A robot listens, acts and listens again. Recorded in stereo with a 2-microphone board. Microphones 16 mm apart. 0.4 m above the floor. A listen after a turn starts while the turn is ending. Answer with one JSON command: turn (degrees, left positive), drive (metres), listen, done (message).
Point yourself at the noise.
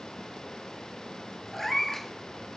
{"turn": 20}
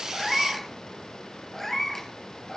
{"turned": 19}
{"turn": 25}
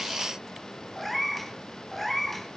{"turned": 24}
{"turn": 30}
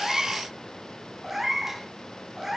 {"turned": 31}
{"turn": -15}
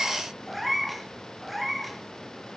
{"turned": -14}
{"done": "Found it: a cat meowing, straight ahead, 2 to 4 m away."}